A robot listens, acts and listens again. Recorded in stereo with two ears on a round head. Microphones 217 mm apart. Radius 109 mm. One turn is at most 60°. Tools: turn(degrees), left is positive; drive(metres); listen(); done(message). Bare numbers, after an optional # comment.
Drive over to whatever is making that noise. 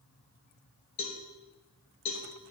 # The cowbell: about 70° left or 110° left.
turn(60)
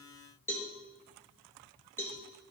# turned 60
# So it is at 10° left.
turn(10)
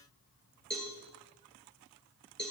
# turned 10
drive(1.0)
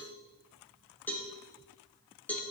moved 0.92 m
drive(1.0)
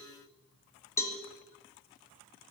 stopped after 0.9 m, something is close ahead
# The cowbell is now 15° left.
turn(15)
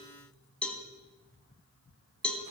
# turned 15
done("I am next to the cowbell.")